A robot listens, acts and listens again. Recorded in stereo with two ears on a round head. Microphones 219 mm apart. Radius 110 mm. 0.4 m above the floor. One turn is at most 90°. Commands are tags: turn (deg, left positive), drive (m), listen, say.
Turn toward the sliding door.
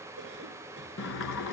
<turn deg="50"/>
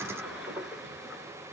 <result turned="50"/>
<say>Found it: a sliding door, straight ahead, 1 to 2 m away.</say>